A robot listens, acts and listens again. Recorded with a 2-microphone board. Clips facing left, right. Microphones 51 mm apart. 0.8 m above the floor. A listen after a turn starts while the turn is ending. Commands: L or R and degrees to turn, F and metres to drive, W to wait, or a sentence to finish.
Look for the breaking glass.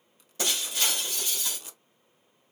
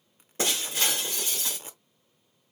R30
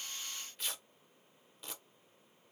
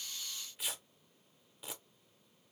W
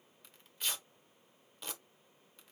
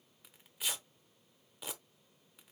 I heard breaking glass, but can't make it out now. It was about straight ahead or 120° right.